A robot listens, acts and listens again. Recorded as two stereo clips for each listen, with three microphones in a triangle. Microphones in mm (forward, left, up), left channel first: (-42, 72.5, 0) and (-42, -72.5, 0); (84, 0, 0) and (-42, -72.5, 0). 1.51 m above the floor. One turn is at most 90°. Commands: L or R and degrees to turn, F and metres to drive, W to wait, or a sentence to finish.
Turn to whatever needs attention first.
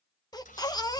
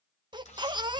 L90
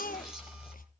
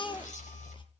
L85
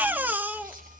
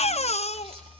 R10
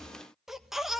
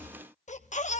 Found it: a baby crying, straight ahead, 1 to 2 m away.